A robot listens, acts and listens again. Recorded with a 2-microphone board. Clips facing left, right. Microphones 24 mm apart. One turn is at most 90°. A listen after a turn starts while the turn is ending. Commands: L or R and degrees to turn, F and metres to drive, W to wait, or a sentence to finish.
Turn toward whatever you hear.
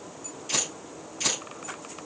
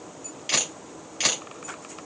R60
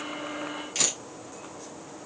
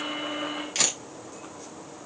R30
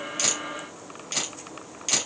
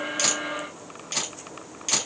Found it: a camera shutter, straight ahead.